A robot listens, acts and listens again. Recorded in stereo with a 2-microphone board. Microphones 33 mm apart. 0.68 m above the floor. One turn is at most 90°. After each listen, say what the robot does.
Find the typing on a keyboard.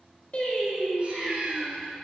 Keep listening.
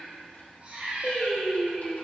Keep listening.
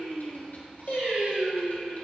I can't make out typing on a keyboard to turn to.